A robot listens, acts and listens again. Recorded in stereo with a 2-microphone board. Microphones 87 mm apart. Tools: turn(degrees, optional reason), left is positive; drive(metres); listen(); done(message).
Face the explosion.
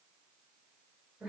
listen()
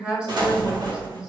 turn(degrees=-55, reason="The explosion: about 55° right or 125° right.")
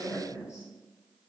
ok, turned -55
listen()
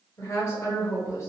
done("I heard an explosion, but can't make it out now. It was about straight ahead or 70° right.")